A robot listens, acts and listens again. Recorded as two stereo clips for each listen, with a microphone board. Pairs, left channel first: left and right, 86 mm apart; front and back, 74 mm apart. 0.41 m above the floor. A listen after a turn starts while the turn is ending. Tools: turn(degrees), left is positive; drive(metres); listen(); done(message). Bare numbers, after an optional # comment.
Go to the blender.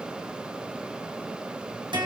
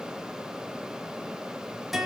listen()
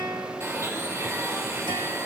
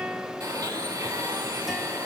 # The blender: 145° right.
turn(-145)
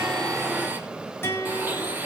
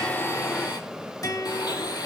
# The blender is now 20° right.
turn(-20)
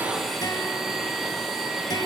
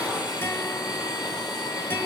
drive(1.0)
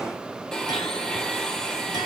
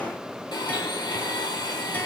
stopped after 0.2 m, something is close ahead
# The blender is now 10° left.
turn(10)
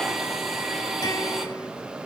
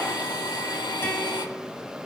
done("Blocked. The blender is further on, straight ahead.")